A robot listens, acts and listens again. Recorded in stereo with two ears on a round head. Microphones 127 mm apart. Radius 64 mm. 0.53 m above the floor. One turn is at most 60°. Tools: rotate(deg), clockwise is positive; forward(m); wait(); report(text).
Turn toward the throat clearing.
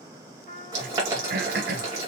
rotate(60)
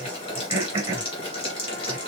rotate(25)
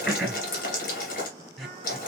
report("Found it: throat clearing, straight ahead, 1 to 2 m away.")